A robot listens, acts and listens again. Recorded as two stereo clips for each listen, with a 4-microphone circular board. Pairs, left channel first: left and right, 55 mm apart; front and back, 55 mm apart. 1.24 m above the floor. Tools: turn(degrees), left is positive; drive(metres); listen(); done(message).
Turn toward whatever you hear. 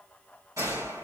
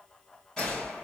turn(degrees=-80)
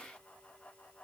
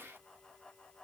done("Facing where the gunshot came from. I can't hear it now.")